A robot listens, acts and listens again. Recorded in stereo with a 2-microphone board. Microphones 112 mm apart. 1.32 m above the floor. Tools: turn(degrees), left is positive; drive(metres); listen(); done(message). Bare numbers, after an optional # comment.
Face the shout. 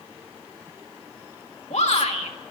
turn(90)
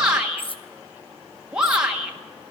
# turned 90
# So it is at 10° right.
turn(-10)
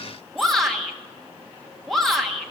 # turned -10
done("Facing the shout.")